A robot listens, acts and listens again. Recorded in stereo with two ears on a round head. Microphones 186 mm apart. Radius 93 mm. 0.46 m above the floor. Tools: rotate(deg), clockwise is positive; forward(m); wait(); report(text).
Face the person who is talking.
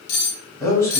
rotate(-30)
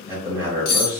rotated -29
rotate(15)
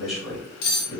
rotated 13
report("Facing the man speaking.")